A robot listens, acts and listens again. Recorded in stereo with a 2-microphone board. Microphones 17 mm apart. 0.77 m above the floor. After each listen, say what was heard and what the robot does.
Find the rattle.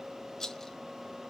The rattle: about 30° left or 150° left. Turn 30° left.
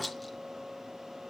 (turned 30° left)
Keep listening.
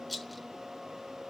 Facing the rattle.